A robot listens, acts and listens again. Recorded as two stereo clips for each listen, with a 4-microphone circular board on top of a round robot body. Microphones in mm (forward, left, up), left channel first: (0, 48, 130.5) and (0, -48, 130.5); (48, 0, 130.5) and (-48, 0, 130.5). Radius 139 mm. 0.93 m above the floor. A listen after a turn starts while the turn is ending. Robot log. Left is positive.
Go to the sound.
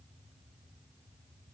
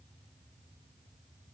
cmd idle
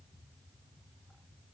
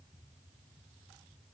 cmd idle
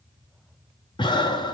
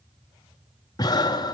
note: The breathing: 50° left.
cmd yaw +50
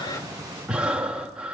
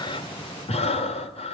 note: The breathing is now 10° right.
cmd yaw -10
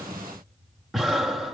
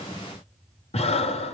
cmd fwd 1.0
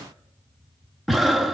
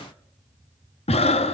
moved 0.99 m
cmd fwd 1.0
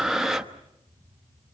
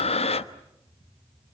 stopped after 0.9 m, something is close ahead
end: I am next to the breathing.